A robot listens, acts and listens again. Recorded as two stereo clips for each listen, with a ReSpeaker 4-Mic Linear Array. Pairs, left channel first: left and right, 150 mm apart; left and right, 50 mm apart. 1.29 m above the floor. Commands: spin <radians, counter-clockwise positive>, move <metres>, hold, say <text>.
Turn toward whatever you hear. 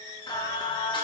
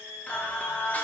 spin 0.61
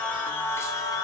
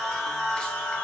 spin 0.44
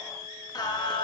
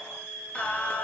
spin 0.61
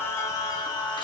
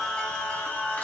spin 0.52
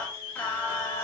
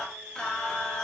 spin 0.26
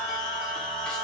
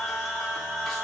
say Found it: singing, straight ahead, 2 to 4 m away.